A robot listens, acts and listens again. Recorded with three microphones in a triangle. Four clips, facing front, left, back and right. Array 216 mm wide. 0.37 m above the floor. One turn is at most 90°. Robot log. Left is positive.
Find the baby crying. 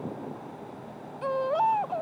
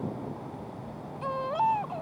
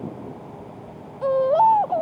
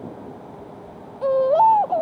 note: The baby crying: 120° right.
cmd yaw -90
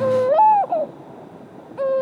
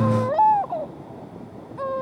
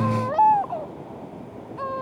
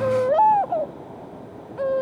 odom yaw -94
note: The baby crying is now 25° right.
cmd yaw -25
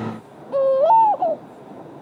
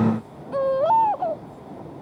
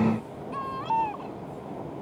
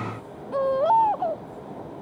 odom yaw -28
end: Found it: a baby crying, straight ahead.